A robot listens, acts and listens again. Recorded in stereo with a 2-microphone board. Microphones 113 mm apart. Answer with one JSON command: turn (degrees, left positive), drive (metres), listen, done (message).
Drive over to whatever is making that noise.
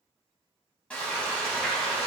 {"turn": 30}
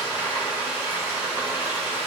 {"turn": -20}
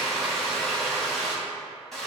{"drive": 1.0}
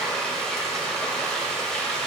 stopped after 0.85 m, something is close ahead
{"done": "I am next to the frying."}